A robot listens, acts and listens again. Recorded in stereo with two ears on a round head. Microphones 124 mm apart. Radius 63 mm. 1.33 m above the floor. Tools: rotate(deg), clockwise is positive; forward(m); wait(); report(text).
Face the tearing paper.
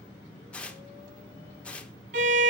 rotate(-30)
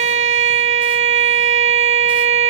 wait()
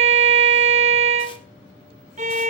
wait()
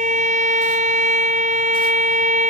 report("I heard tearing paper, but can't make it out now. It was about 20° right or 140° left.")